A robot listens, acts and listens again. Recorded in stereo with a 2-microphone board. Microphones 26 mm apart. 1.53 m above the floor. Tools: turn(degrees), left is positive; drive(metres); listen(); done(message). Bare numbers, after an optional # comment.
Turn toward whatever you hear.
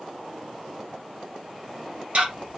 # The ticking: about 60° right or 120° right.
turn(-60)
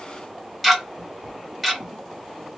done("Found it: ticking, straight ahead.")